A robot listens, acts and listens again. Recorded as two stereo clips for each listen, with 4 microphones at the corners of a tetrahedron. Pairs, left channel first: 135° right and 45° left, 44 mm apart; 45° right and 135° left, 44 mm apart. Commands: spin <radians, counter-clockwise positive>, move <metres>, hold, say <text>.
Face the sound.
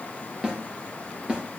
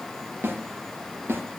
spin 1.92
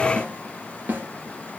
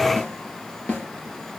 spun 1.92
say Found it: a snare drum, straight ahead, 2 to 4 m away.